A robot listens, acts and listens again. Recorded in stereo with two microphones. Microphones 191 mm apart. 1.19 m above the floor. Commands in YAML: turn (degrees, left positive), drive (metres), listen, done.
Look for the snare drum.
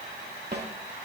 turn: -65
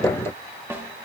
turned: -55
turn: -15
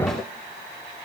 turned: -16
listen: true
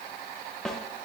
done: "Found it: a snare drum, straight ahead, 2 to 4 m away."